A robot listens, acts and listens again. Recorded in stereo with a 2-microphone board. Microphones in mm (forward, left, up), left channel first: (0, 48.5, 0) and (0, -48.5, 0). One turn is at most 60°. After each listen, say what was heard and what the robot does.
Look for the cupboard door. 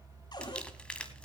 The cupboard door: about 50° left or 130° left. Turn 50° left.
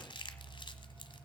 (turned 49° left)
Keep listening.
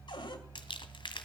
So it is at 70° left. Turn 60° left.
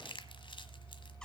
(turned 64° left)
The cupboard door is now 10° left. Turn 10° left.
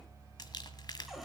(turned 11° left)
Found it: a cupboard door, straight ahead, 2 to 4 m away.